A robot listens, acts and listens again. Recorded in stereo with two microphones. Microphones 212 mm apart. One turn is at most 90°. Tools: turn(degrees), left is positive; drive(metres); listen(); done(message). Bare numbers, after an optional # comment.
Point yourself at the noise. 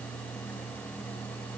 listen()
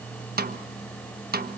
# The snare drum: about 45° right or 135° right.
turn(-45)
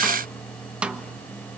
done("Found it: a snare drum, straight ahead.")